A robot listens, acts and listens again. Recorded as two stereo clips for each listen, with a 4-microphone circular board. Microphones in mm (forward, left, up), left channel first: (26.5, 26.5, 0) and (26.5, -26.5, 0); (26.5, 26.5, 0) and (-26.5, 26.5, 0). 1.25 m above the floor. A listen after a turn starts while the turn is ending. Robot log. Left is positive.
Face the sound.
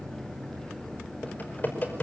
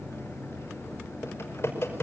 note: The typing on a keyboard: 35° left.
cmd yaw +35
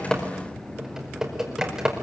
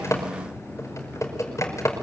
note: The typing on a keyboard is now 10° right.
cmd yaw -10
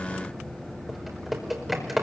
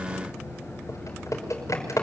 end: Facing the typing on a keyboard, over 4 m away.